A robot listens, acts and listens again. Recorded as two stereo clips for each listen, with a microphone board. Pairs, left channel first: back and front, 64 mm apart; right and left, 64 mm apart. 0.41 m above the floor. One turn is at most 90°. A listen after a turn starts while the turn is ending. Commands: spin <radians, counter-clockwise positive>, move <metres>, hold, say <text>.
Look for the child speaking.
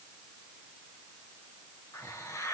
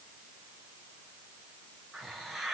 hold
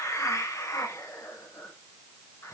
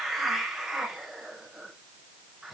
hold
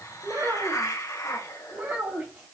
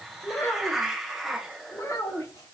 spin -1.13
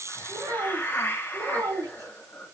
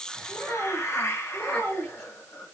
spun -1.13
spin -0.26
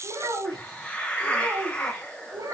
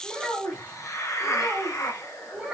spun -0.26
say Found it: a child speaking, straight ahead.